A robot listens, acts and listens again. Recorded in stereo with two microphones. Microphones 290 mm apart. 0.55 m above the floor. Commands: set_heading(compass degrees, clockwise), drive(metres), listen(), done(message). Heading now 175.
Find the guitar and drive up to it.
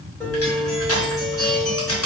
set_heading(145)
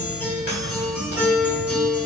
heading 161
drive(1.0)
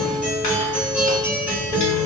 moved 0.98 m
drive(1.0)
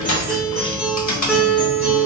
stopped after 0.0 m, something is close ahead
done("Arrived at the guitar, straight ahead.")